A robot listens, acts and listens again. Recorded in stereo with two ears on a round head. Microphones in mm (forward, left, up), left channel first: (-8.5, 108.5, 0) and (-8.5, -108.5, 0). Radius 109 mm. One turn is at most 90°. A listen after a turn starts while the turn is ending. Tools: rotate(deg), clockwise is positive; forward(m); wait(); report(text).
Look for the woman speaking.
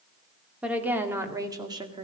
rotate(20)
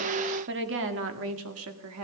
rotate(90)
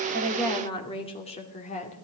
rotate(-30)
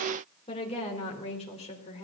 rotate(-25)
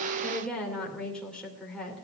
report("Facing the woman speaking.")